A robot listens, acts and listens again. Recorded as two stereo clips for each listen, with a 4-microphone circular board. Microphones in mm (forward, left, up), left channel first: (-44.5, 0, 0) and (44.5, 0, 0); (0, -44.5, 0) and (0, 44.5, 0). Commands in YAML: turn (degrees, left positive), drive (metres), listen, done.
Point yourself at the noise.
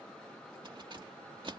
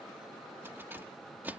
turn: 20
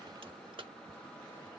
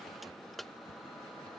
done: "Facing the keys jangling."